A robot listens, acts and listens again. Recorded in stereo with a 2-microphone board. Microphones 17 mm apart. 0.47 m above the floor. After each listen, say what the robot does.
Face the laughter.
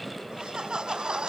Turn 55° right.
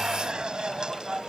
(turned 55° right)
Turn 55° right.
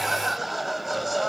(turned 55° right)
Facing the laughter.